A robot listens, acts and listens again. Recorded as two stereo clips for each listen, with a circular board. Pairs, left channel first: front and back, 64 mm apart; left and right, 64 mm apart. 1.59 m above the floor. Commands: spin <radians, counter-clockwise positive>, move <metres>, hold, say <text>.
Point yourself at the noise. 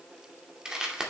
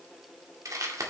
spin -1.83
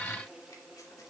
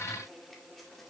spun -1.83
hold
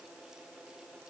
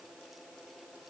hold
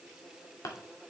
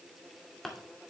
say Facing the crumpling.